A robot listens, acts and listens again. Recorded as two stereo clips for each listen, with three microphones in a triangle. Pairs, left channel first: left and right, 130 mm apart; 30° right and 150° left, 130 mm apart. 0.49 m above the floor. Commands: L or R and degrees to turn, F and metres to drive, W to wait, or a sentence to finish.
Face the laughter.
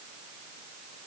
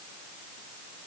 W
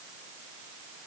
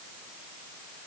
W
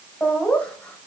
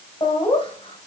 L10
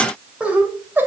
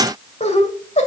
R15
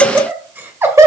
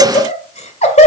R25
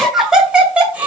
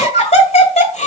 R15
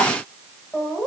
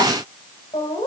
Facing the laughter.